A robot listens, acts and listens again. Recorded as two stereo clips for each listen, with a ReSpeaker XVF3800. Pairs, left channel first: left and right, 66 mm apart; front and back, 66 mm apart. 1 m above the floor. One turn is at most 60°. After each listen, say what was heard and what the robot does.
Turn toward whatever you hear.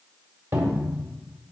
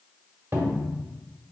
The cupboard door: 130° right. Turn 60° right.
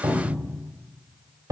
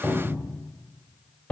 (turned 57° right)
The cupboard door is now 70° right. Turn 60° right.
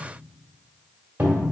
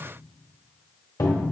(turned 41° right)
The cupboard door is now 30° right. Turn 30° right.
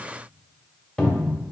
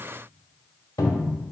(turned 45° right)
The cupboard door is now 10° left. Turn 10° left.
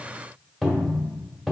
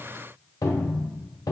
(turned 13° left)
Facing the cupboard door, 1 to 2 m away.